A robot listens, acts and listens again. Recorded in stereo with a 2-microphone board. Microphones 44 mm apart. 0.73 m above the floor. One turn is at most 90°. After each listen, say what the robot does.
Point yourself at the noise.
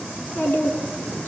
Turn 60° left.
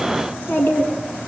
Turn 60° left.
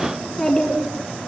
Facing the child speaking, over 4 m away.